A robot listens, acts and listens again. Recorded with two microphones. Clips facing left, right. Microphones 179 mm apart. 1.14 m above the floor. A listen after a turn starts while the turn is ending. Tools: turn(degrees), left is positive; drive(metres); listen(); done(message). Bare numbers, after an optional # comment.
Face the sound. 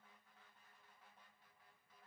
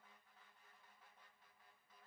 listen()
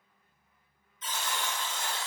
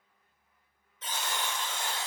# The buzzer: about 70° right or 110° right.
turn(-70)
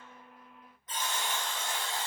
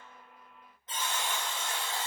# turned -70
# So it is at 30° right.
turn(-30)
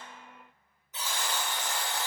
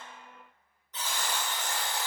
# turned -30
done("Facing the buzzer, 1 to 2 m away.")